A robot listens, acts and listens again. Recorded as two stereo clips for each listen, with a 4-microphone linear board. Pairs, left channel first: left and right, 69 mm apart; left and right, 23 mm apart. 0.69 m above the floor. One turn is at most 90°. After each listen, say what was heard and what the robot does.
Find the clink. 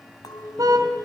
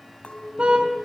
The clink: about 65° left or 115° left. Turn 65° left.
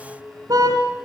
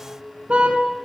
Facing the clink.